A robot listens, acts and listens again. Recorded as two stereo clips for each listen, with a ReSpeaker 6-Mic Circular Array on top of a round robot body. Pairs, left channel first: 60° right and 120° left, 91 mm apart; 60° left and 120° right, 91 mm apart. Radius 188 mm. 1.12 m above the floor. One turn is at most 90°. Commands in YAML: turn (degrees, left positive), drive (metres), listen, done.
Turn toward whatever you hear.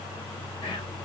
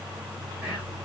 turn: -30
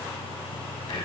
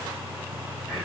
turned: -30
turn: -20
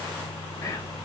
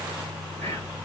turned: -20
done: "Found it: whispering, straight ahead."